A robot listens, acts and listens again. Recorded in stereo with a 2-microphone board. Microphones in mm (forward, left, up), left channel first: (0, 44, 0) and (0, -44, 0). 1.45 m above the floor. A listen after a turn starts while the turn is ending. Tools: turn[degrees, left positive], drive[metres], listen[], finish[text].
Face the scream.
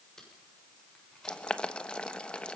Action: listen[]
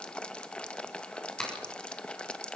Action: listen[]
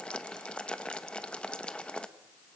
Action: finish[I can't make out a scream, only boiling and tape being pulled.]